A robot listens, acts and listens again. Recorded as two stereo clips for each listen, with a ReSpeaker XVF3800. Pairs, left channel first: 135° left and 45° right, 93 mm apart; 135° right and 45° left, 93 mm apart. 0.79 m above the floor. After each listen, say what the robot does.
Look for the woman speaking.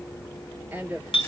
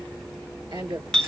Turn 20° left.
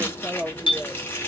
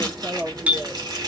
Facing the woman speaking.